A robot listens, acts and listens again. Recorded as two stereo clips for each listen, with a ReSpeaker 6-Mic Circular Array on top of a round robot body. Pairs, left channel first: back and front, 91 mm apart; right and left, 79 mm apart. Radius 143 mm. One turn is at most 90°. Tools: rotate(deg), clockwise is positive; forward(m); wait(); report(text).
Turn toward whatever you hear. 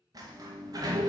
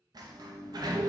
rotate(-50)
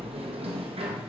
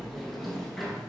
report("Found it: a sliding door, straight ahead.")